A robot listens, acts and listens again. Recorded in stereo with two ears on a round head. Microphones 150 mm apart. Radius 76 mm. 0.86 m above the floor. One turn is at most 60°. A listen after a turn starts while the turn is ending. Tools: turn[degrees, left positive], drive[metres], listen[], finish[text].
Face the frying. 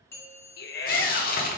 Thought: The frying: about 60° left or 120° left.
Action: turn[60]
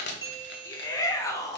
Action: listen[]
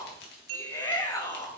Action: listen[]
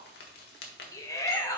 Thought: So it is at 65° left.
Action: turn[60]
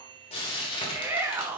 Thought: The frying is now 30° left.
Action: turn[30]
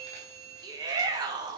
Action: listen[]
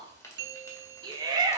Action: listen[]
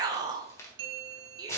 Thought: The frying is now 15° left.
Action: turn[15]
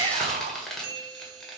Action: finish[Facing the frying, 1 to 2 m away.]